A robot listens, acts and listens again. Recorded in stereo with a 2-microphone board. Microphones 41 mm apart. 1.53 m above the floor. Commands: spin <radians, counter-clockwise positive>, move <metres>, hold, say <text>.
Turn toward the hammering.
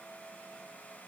hold
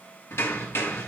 spin 1.57
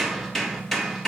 say Facing the hammering, 2 to 4 m away.